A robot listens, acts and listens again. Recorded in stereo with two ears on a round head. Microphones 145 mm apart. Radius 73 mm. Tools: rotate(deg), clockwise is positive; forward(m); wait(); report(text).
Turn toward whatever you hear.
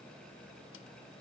wait()
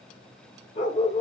rotate(-40)
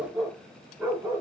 rotate(15)
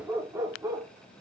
rotate(25)
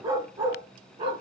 rotate(35)
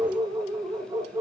rotate(20)
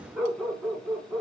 report("Found it: a dog barking, straight ahead, 1 to 2 m away.")